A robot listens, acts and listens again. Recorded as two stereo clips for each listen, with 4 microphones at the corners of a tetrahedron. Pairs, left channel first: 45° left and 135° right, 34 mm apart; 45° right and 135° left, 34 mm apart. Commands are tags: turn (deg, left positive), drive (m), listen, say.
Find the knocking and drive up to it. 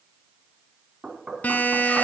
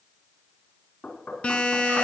<turn deg="-70"/>
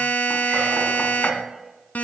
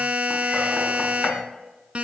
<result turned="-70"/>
<listen/>
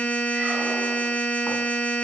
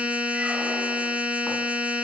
<listen/>
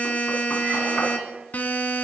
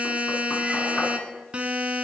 <say>Facing where the knocking came from. I can't hear it now. I did not reach it.</say>